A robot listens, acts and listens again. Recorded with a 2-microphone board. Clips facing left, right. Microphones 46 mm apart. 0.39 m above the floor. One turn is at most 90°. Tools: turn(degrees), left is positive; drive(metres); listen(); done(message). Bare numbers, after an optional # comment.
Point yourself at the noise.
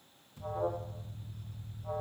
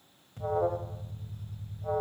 # The alarm: about 55° right or 125° right.
turn(-55)
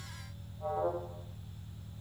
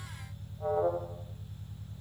# So it is at 25° right.
turn(-25)
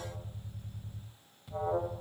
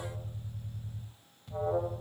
done("Facing the alarm.")